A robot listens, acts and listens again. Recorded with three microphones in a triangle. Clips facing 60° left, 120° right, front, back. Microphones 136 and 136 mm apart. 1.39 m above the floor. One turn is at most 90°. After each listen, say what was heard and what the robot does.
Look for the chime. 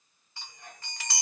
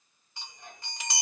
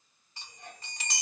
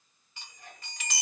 The chime: 50° right. Turn 50° right.
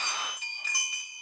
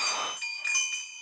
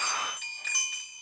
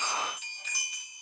Found it: a chime, straight ahead.